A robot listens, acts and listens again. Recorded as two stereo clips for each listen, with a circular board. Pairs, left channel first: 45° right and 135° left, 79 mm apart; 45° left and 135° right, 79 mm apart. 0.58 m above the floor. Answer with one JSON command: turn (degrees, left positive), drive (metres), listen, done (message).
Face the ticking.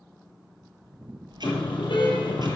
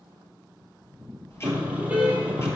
{"turn": 105}
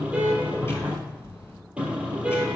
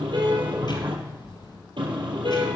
{"turn": 15}
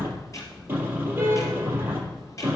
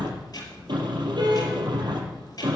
{"done": "Found it: ticking, straight ahead."}